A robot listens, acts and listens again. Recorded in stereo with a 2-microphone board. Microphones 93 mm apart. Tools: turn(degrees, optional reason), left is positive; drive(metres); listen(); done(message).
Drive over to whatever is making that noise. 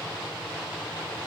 listen()
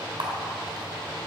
turn(degrees=-60, reason="The camera shutter: about 60° right or 120° right.")
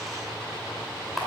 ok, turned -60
drive(metres=1.0)
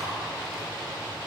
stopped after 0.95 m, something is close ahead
listen()
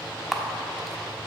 done("I am next to the camera shutter.")